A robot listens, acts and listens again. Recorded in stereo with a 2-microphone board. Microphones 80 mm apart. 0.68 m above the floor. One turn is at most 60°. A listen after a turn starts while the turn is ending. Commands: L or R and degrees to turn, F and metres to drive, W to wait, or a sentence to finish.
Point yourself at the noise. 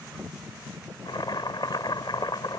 L60
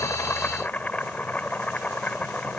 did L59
L20
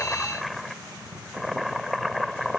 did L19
Facing the boiling.